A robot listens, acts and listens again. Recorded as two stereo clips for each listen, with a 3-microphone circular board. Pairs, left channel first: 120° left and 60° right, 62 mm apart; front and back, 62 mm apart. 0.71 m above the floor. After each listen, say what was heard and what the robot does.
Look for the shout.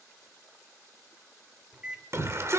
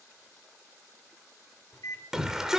The shout: 100° right. Turn 100° right.
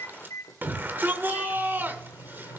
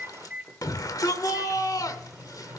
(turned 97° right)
Found it: a shout, straight ahead.